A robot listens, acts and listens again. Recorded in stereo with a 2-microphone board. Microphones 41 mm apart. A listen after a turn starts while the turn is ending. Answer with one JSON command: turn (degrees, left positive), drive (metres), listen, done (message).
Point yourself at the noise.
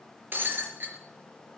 {"turn": -55}
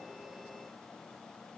{"listen": true}
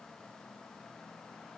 {"done": "I heard breaking glass, but can't make it out now. It was about straight ahead or 70° right."}